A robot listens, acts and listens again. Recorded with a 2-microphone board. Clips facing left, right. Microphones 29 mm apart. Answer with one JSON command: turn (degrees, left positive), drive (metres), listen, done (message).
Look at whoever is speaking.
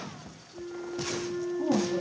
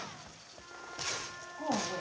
{"turn": -90}
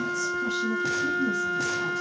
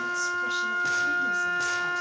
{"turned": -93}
{"listen": true}
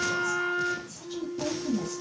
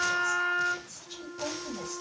{"turn": -10}
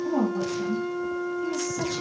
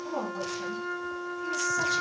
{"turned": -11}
{"done": "Found it: a woman speaking, straight ahead, 1 to 2 m away."}